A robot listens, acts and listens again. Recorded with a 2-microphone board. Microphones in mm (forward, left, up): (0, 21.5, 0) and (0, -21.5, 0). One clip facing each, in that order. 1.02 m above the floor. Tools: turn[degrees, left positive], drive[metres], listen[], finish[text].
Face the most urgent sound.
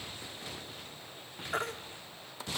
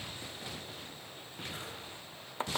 Thought: The baby crying: about 75° left or 105° left.
Action: turn[75]
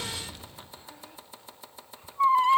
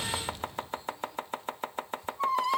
Thought: So it is at 30° left.
Action: turn[30]
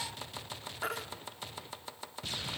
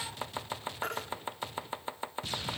Action: finish[Facing the baby crying.]